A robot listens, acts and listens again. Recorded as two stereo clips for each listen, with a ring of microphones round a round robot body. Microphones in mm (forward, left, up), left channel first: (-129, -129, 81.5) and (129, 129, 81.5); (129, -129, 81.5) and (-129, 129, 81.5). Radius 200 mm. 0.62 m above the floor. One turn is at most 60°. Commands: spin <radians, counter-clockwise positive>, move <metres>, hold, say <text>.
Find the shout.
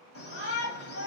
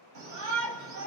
spin 1.05
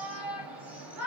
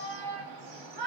spin 1.05
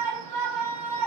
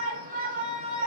spin 1.05
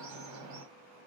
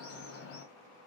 say Facing the shout.